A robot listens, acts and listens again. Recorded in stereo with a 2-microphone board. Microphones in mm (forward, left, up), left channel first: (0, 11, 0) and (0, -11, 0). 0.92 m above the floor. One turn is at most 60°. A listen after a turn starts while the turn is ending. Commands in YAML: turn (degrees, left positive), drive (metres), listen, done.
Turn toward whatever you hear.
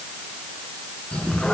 turn: 55
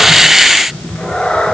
turn: 60
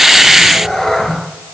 turn: 20
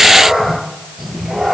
done: "Facing the cat meowing."